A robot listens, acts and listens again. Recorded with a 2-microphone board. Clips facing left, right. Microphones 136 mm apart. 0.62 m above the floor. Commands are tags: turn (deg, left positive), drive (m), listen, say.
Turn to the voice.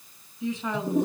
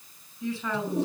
<turn deg="20"/>
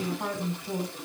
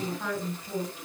<turn deg="140"/>
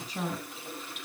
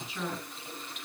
<turn deg="40"/>
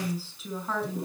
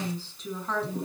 <say>Found it: a woman speaking, straight ahead.</say>